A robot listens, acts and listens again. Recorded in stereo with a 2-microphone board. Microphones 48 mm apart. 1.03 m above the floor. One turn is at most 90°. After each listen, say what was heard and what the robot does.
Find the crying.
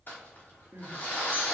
Turn 90° right.
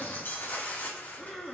Found it: crying, straight ahead, 1 to 2 m away.